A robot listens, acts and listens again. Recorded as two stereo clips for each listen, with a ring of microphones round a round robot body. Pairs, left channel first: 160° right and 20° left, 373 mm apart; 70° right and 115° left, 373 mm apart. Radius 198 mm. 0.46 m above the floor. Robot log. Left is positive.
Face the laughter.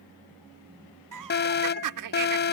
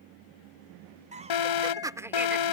note: The laughter: 30° left.
cmd yaw +30
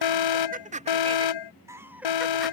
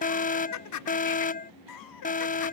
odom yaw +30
note: The laughter is now 60° right.
cmd yaw -60
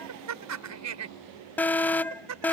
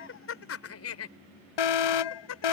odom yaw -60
note: The laughter is now 20° right.
cmd yaw -20
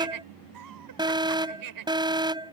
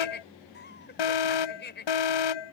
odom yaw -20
end: Facing the laughter.